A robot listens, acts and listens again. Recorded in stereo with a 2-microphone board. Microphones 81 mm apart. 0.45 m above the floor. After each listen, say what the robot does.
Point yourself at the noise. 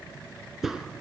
Turn 30° right.
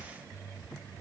Keep listening.
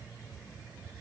I heard a crack, but can't make it out now. It was about 25° left or 145° right.